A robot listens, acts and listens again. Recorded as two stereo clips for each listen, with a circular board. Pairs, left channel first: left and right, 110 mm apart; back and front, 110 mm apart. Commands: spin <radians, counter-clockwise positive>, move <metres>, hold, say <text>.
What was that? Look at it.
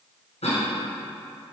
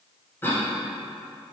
spin 1.92
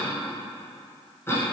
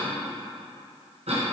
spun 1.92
spin 0.35
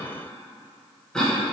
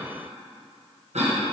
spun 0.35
say Facing the cough.